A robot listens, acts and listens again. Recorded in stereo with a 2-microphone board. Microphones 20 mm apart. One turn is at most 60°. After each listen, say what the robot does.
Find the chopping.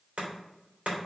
Turn 60° right.
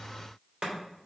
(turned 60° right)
Turn 50° right.
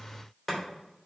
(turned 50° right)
Facing the chopping.